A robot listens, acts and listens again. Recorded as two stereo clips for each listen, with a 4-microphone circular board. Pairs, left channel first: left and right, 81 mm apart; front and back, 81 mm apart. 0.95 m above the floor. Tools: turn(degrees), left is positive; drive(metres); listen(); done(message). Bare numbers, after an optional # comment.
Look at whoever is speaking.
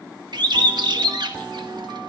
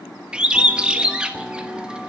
listen()
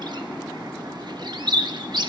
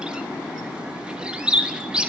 listen()
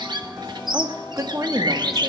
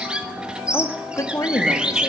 # The woman speaking: 50° right.
turn(-50)
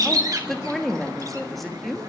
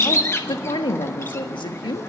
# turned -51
done("Found it: a woman speaking, straight ahead, 1 to 2 m away.")